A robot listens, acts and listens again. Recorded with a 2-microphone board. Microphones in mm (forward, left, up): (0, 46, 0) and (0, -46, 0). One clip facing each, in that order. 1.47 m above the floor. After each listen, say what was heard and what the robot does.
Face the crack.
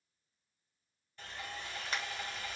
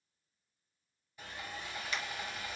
The crack: about 40° left or 140° left. Turn 40° left.
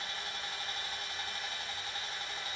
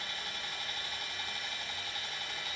Keep listening.
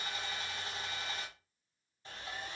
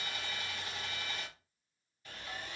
I heard a crack, but can't make it out now. It was about straight ahead or 100° left.